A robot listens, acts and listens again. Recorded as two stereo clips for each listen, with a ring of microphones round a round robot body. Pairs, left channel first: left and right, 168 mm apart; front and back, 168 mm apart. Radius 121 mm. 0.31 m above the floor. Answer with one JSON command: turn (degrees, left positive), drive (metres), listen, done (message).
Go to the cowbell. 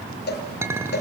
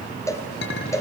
{"turn": 75}
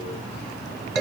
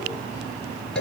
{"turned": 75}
{"listen": true}
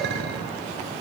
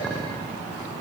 {"listen": true}
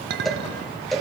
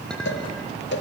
{"drive": 1.0}
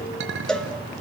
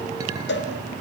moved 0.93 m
{"drive": 1.0}
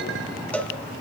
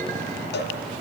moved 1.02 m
{"drive": 1.0}
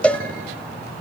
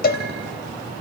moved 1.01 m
{"turn": 10}
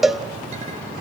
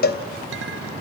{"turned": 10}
{"drive": 1.0}
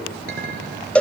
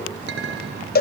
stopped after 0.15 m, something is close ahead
{"turn": 10}
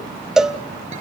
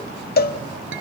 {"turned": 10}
{"done": "I am next to the cowbell."}